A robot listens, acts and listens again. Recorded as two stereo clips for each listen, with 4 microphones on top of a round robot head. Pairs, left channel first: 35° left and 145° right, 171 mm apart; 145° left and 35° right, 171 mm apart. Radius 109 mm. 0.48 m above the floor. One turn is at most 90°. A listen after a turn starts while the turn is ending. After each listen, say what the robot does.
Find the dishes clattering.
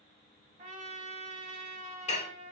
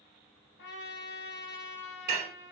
Turn 15° right.
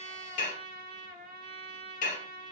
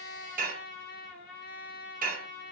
Found it: dishes clattering, straight ahead, 1 to 2 m away.